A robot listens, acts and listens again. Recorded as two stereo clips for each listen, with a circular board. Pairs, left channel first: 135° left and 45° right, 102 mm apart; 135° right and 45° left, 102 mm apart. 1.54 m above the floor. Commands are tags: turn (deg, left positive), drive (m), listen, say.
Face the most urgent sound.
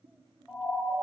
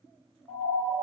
<turn deg="40"/>
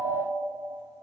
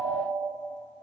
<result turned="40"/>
<say>Facing the siren.</say>